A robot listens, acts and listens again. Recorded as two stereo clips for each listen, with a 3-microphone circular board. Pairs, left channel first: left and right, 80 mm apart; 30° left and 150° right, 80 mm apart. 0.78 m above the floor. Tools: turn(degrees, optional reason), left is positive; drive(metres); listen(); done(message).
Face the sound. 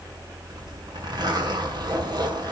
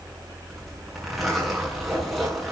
turn(degrees=-60, reason="The zipper: 60° right.")
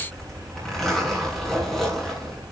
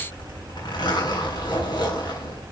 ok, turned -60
done("Facing the zipper.")